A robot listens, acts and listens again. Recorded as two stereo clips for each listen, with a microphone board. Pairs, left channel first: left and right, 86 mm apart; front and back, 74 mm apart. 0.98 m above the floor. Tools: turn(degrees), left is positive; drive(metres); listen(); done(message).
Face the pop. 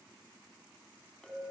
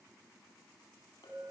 listen()
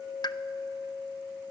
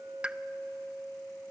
turn(degrees=110)
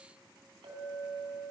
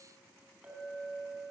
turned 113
done("I heard a pop from this way, but can't make it out now.")